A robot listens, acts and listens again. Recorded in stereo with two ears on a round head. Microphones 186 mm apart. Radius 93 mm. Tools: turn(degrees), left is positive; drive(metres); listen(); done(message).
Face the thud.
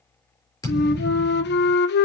turn(degrees=15)
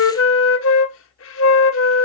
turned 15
listen()
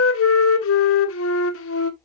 done("I heard a thud, but can't make it out now. It was about straight ahead or 150° left.")